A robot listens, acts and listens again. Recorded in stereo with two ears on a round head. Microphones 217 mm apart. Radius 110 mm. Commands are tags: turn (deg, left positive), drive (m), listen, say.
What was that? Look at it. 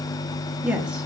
<turn deg="-30"/>
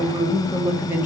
<turn deg="-30"/>
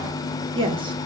<turn deg="-155"/>
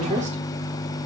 <turn deg="-30"/>
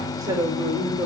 <turn deg="-15"/>
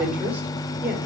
<say>Found it: a woman speaking, straight ahead, 2 to 4 m away.</say>